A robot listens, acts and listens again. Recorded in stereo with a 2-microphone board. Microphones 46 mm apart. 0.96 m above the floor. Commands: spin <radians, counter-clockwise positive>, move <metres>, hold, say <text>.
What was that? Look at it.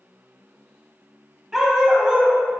spin -0.26
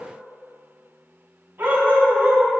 spin -2.18
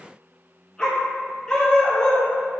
spin 0.26
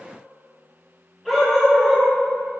say Found it: a dog barking, straight ahead.